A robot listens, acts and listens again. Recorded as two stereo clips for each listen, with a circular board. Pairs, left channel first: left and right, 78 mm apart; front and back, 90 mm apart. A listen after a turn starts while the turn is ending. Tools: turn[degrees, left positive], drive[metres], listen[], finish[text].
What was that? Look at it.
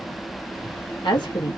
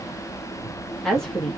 Thought: The woman speaking: 85° left.
Action: turn[85]
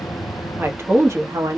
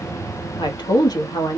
Thought: The woman speaking is now 45° right.
Action: turn[-45]
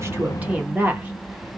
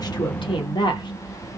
Thought: The woman speaking is now 25° right.
Action: turn[-25]
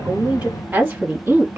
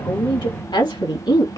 Thought: The woman speaking is now 25° right.
Action: turn[-25]
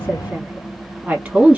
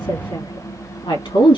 Thought: The woman speaking is now 15° right.
Action: turn[-15]
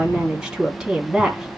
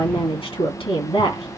Action: finish[Found it: a woman speaking, straight ahead.]